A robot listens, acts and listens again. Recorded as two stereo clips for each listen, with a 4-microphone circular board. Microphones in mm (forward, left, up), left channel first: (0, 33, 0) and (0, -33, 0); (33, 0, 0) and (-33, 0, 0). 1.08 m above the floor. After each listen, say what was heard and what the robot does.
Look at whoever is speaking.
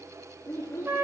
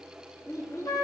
The child speaking: 45° left. Turn 45° left.
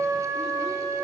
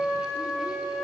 Keep listening.
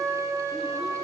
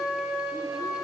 Keep listening.
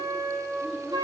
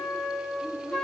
I heard a child speaking from this way, but can't make it out now.